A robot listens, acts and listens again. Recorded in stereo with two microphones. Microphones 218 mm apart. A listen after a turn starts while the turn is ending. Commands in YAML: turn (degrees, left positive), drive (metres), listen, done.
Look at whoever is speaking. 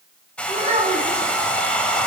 turn: -30
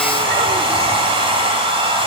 listen: true
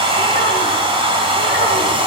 listen: true
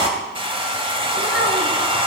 done: "I heard a child speaking, but can't make it out now. It was about straight ahead or 120° right."